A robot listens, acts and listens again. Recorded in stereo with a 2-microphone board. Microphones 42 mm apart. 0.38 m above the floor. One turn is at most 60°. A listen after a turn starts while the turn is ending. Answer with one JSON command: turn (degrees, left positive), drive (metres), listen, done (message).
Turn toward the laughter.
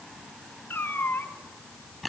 {"listen": true}
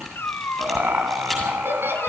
{"turn": -60}
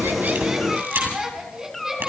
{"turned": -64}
{"turn": -15}
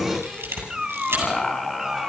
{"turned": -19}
{"done": "Found it: laughter, straight ahead."}